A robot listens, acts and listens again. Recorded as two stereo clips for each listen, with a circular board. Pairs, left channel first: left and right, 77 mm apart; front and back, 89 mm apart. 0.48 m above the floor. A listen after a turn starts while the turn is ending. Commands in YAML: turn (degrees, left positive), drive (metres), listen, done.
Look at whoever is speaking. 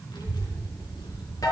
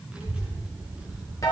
turn: 105
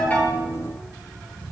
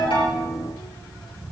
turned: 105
done: "Found it: a child speaking, straight ahead."